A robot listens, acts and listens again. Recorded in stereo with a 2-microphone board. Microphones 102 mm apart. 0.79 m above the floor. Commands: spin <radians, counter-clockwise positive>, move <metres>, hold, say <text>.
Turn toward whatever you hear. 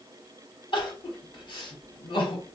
spin 0.79
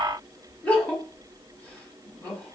spin 0.26
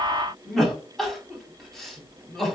say Facing the crying, 1 to 2 m away.